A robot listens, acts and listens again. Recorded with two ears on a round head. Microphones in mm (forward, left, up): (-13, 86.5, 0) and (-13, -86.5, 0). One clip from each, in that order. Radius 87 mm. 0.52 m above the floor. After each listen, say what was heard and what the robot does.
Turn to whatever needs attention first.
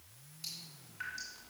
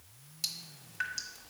Keep listening.
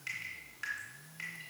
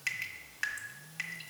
Keep listening.
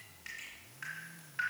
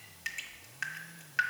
I can't make out anything urgent, only dripping.